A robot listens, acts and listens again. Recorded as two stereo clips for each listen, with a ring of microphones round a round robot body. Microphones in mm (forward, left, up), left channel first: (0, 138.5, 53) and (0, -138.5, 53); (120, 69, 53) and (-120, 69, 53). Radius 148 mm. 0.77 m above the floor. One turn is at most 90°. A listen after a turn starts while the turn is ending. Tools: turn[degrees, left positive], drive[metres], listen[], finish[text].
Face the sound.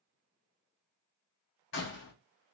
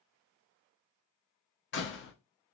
Thought: The door slam: 40° left.
Action: turn[40]
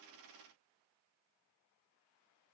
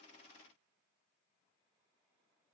Action: finish[I heard a door slam from this way, but can't make it out now.]